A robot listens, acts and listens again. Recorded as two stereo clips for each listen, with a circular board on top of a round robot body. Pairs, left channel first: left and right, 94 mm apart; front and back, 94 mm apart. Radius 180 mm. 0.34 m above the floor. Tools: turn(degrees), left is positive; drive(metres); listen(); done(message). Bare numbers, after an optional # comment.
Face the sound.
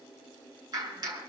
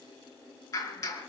# The clap: 50° right.
turn(-50)
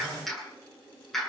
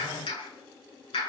done("Facing the clap, over 4 m away.")